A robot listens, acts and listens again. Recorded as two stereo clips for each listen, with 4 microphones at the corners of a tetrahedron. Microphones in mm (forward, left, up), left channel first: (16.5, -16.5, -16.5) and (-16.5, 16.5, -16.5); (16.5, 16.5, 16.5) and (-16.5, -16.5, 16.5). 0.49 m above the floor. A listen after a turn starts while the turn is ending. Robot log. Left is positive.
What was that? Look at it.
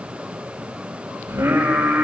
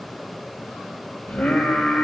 note: The singing: 95° left.
cmd yaw +95
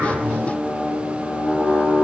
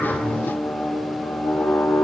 end: Facing the singing, over 4 m away.